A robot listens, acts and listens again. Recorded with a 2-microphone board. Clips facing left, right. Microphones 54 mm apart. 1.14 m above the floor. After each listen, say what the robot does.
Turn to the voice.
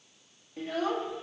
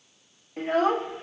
Turn 45° right.
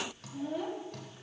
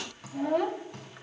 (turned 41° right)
Turn 95° right.
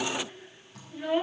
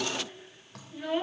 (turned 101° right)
Facing the child speaking.